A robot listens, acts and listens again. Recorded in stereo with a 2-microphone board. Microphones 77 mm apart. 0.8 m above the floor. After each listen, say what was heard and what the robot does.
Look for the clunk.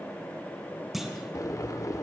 Turn 30° right.
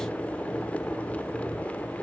Keep listening.
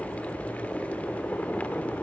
I heard a clunk, but can't make it out now. It was about 25° left or 145° right.